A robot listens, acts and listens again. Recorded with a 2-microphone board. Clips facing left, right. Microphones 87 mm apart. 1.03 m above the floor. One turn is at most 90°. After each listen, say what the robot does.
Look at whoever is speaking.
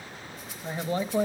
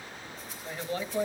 Turn 35° left.
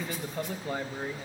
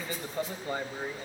Facing the man speaking, under 1 m away.